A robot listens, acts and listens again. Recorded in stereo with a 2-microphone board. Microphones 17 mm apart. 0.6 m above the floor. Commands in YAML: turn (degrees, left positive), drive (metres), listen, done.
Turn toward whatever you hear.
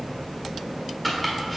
turn: 30
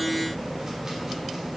listen: true
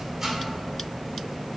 listen: true
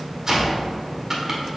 turn: -30
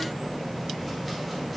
listen: true
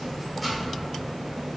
listen: true
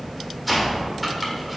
done: "Facing the chopping, 1 to 2 m away."